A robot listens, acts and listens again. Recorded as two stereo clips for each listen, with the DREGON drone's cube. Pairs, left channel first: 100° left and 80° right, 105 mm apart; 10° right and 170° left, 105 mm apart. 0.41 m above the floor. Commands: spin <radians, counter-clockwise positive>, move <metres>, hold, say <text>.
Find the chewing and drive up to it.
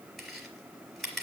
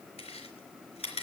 spin 0.26
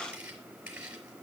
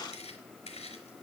move 1.0
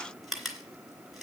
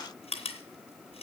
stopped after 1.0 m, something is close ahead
spin 0.17
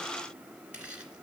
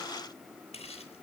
say Blocked. The chewing is further on, straight ahead.